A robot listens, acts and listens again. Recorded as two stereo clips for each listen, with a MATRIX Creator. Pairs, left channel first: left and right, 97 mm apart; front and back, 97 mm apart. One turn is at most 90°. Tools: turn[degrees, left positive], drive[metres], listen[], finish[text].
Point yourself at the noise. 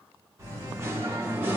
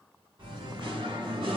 Thought: The singing: 160° right.
Action: turn[-90]
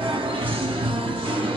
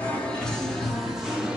Thought: The singing is now 100° right.
Action: turn[-90]
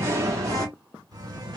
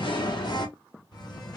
Thought: The singing is now 45° right.
Action: turn[-45]
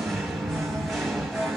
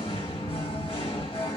Action: finish[Facing the singing.]